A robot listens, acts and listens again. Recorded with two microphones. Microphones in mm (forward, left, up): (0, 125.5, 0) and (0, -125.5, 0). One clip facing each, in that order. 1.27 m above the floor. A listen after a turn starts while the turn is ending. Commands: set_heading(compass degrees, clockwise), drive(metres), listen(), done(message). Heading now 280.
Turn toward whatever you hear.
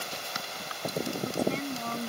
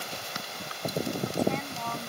set_heading(245)
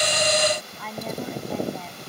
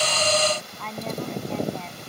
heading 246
done("Facing the woman speaking.")